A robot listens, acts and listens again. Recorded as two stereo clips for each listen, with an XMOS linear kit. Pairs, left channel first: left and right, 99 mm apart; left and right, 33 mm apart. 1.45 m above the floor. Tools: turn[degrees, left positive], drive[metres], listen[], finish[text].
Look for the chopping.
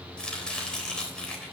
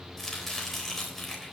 Action: turn[30]
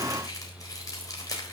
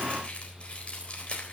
Thought: So it is at 140° left.
Action: turn[140]
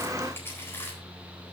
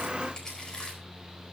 Thought: The chopping is now 25° left.
Action: turn[25]
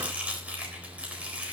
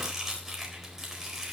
Thought: The chopping is now 15° right.
Action: turn[-15]
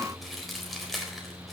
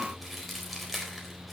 Action: finish[Facing the chopping, 2 to 4 m away.]